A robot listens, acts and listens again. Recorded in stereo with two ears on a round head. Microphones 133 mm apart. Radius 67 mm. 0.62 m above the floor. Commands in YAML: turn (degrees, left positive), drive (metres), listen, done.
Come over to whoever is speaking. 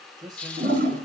turn: -30
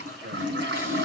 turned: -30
turn: -120
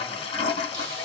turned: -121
listen: true
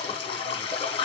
listen: true
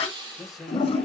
drive: 1.0
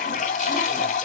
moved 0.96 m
listen: true
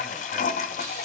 listen: true
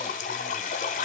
done: "Facing where the man speaking came from. I can't hear it now. I did not reach it."